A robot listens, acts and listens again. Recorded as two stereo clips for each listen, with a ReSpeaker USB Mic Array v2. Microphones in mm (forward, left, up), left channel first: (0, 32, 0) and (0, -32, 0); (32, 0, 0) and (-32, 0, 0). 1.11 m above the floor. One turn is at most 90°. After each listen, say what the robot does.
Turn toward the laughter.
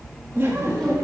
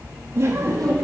Turn 90° right.
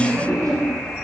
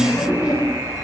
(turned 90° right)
Turn 30° right.
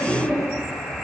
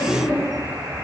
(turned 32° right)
Turn 10° left.
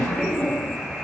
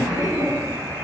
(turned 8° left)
Turn 10° left.
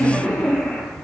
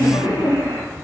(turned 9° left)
Found it: laughter, straight ahead, 2 to 4 m away.